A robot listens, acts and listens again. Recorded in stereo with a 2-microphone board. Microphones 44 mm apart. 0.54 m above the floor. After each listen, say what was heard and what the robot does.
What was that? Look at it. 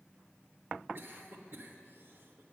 The cough: about 55° right or 125° right. Turn 55° right.
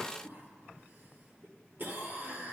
So it is at 55° right. Turn 55° right.
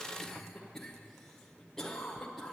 The cough is now 10° left. Turn 10° left.
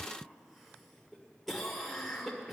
Found it: a cough, straight ahead, 1 to 2 m away.